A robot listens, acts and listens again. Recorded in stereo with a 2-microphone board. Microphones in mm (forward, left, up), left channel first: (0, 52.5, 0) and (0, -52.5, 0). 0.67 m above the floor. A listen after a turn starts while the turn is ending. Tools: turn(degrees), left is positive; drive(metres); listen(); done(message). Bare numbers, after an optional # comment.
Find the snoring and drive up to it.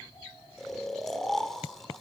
turn(30)
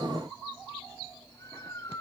# So it is at 150° left.
turn(150)
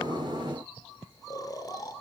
# The snoring is now 40° left.
turn(40)
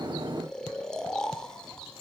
# The snoring is now 10° left.
turn(10)
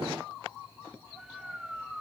drive(1.0)
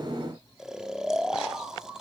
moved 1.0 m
drive(1.0)
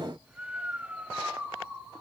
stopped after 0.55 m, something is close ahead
# The snoring is now 20° right.
turn(-20)
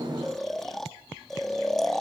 done("Arrived at the snoring, straight ahead.")